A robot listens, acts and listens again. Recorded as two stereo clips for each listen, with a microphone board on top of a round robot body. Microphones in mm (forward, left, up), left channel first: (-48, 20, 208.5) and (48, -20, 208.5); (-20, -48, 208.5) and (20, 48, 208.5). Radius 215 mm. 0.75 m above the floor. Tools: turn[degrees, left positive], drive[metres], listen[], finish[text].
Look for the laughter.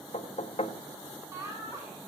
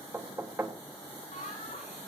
Thought: The laughter: 90° right.
Action: turn[-90]
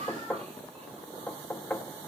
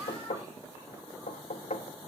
Action: listen[]
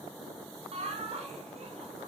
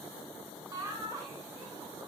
Action: finish[Found it: laughter, straight ahead.]